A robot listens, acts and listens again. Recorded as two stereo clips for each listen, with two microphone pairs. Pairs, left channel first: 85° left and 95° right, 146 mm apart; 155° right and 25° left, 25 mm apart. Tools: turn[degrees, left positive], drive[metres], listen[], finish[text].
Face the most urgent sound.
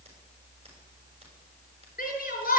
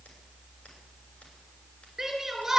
Thought: The shout: 95° left.
Action: turn[95]
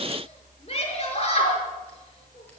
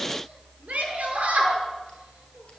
Thought: The shout is now 45° left.
Action: turn[45]
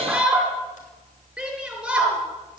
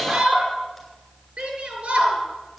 Thought: The shout is now 10° right.
Action: turn[-10]
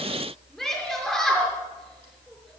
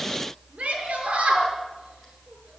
Action: finish[Facing the shout.]